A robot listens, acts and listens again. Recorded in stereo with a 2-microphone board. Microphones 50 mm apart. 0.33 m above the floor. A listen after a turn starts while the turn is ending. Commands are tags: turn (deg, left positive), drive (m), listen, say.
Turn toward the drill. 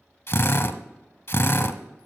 <turn deg="65"/>
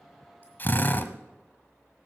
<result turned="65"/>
<turn deg="40"/>
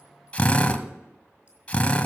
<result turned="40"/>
<turn deg="20"/>
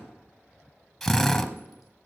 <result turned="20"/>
<say>Facing the drill, 1 to 2 m away.</say>